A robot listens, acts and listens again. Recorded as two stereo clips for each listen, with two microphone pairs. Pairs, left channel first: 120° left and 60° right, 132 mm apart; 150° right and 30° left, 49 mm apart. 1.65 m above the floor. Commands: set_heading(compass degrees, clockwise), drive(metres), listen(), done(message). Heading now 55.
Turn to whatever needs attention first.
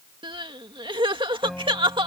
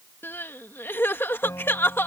set_heading(165)
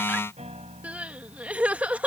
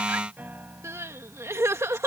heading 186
set_heading(166)
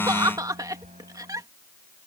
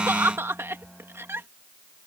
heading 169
done("Facing the crying.")